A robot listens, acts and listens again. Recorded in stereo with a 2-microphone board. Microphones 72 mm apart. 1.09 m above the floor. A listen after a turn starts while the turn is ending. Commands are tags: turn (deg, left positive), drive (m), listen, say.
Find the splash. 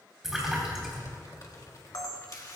<turn deg="-30"/>
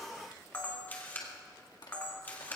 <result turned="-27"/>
<listen/>
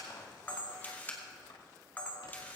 <say>I heard a splash, but can't make it out now. It was about 20° left or 150° right.</say>